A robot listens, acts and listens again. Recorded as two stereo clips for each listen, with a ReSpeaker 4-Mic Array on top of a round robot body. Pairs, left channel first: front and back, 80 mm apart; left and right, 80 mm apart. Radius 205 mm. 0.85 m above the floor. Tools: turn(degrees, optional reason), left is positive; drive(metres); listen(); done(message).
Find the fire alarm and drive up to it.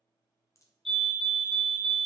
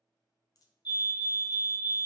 turn(degrees=85, reason="The fire alarm: 85° left.")
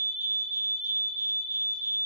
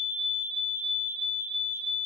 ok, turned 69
turn(degrees=20, reason="The fire alarm is now 20° left.")
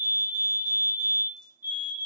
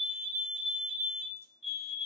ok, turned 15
drive(metres=1.0)
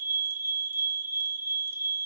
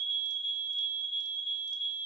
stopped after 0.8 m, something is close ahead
done("Arrived at the fire alarm, straight ahead.")